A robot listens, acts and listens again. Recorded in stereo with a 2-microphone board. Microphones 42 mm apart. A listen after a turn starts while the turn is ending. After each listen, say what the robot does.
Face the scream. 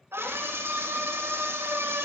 Turn 75° right.
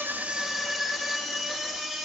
Found it: a scream, straight ahead, 2 to 4 m away.